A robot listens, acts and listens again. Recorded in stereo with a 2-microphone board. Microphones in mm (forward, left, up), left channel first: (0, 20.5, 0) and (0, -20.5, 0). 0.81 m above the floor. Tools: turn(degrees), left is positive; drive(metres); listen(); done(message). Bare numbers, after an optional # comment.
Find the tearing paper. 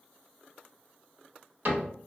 listen()
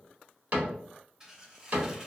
# The tearing paper: about 20° right or 160° right.
turn(-20)
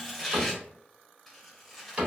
done("Found it: tearing paper, straight ahead, under 1 m away.")